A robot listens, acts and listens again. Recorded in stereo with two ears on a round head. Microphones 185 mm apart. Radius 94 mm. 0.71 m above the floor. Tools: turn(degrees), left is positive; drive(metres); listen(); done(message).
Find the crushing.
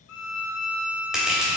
turn(degrees=-30)
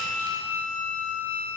listen()
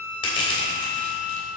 turn(degrees=25)
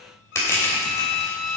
turn(degrees=15)
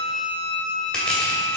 done("Facing the crushing.")